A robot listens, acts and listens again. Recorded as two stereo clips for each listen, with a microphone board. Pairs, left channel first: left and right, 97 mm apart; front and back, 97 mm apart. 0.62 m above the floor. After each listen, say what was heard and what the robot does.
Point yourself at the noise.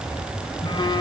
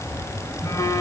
The phone buzzing: 55° left. Turn 55° left.
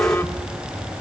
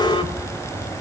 Keep listening.
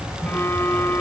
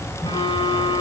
The phone buzzing is now 20° left. Turn 20° left.
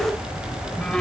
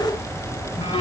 The phone buzzing is now 10° left. Turn 10° left.
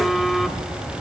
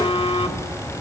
Facing the phone buzzing, 1 to 2 m away.